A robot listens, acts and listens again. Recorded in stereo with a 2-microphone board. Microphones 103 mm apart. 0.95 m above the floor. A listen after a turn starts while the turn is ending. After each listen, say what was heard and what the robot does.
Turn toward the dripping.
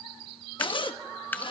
The dripping: about 20° left or 160° left. Turn 20° left.
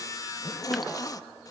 Keep listening.
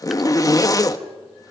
Keep listening.
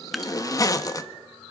Found it: dripping, straight ahead.